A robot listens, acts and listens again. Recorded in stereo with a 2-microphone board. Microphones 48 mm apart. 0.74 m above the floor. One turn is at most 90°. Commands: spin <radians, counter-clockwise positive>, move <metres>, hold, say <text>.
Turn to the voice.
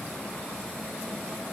hold
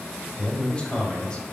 spin 0.35
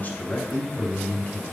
spin 1.57
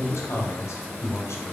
spin 1.57
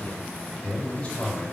spin 0.52
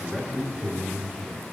spin -0.26
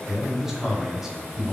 say Found it: a man speaking, straight ahead.